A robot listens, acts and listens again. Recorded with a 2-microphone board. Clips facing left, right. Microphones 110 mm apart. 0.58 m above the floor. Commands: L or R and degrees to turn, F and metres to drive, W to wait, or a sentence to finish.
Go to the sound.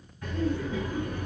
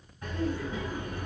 R25
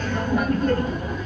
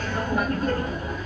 F1.0
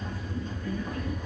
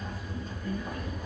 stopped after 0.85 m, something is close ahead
R10
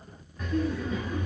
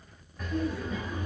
Arrived at the laughter, straight ahead.